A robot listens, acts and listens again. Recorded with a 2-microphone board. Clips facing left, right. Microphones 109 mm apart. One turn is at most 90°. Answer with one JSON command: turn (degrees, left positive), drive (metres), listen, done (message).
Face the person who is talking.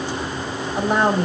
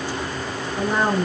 {"turn": 70}
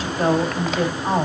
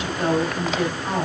{"turn": 35}
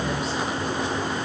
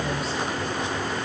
{"listen": true}
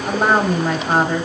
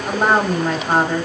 {"done": "Found it: a woman speaking, straight ahead, 2 to 4 m away."}